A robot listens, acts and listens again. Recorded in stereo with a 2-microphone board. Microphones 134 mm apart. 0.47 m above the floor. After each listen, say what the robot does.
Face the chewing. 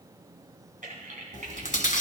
Turn 90° left.
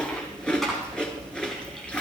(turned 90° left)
Facing the chewing, 1 to 2 m away.